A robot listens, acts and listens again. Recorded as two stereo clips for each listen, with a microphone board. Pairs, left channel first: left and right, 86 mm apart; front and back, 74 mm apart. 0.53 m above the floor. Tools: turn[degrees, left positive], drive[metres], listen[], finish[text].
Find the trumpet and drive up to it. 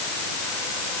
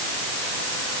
Action: listen[]
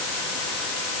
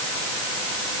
Action: listen[]
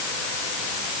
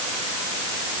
Action: finish[I can't make out a trumpet to turn to.]